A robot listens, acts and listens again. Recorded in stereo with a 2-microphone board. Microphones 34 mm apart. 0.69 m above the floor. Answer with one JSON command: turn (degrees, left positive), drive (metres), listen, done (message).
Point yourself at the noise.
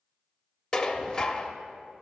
{"turn": 30}
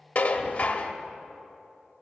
{"turn": 135}
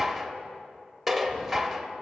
{"done": "Facing the dishes clattering, under 1 m away."}